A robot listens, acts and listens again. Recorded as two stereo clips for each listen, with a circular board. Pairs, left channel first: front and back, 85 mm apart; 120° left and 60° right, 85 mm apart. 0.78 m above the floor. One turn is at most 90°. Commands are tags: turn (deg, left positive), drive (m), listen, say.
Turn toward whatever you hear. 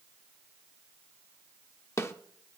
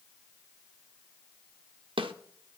<turn deg="-60"/>
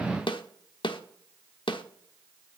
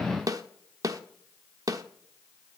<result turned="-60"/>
<turn deg="-15"/>
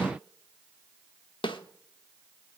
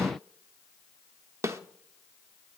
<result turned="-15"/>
<say>Facing the snare drum.</say>